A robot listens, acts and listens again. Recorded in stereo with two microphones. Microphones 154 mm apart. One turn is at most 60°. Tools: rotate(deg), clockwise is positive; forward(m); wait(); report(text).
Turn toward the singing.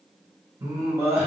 rotate(30)
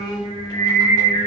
rotate(-45)
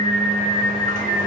rotate(-50)
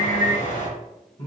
rotate(-30)
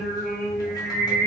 report("Found it: singing, straight ahead, 2 to 4 m away.")